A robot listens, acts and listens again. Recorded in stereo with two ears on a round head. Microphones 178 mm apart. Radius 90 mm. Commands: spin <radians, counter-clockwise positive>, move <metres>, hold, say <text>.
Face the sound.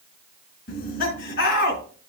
spin 0.79
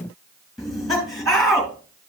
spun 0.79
say Found it: laughter, straight ahead, 2 to 4 m away.